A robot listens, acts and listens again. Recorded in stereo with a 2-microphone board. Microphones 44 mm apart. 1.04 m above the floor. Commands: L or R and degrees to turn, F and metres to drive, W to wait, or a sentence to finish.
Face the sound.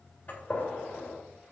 L30
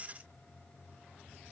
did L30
W
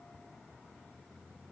I heard a gunshot, but can't make it out now. It was about straight ahead or 120° left.